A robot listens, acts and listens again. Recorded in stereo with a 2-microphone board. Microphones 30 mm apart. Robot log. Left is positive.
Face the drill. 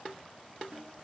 cmd idle
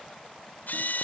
note: The drill: about 70° left or 110° left.
cmd yaw +70
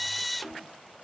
end: Found it: a drill, straight ahead.